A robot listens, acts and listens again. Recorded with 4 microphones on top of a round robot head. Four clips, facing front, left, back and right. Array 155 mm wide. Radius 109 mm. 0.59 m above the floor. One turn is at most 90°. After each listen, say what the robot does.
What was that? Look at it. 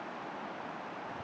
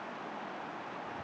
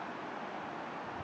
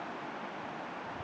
Keep listening.
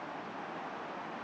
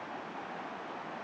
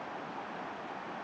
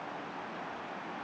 Keep listening.
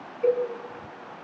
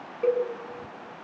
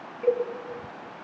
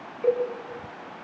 Turn 85° left.
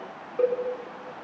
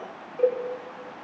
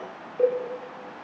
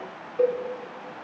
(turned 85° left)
Turn 10° right.
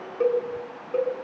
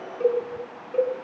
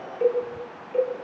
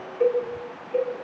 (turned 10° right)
Facing the cowbell, over 4 m away.